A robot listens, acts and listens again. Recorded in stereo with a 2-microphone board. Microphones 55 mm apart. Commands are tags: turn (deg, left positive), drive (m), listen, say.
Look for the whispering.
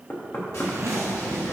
<turn deg="55"/>
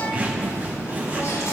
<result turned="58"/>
<turn deg="65"/>
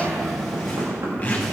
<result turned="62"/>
<say>Facing the whispering.</say>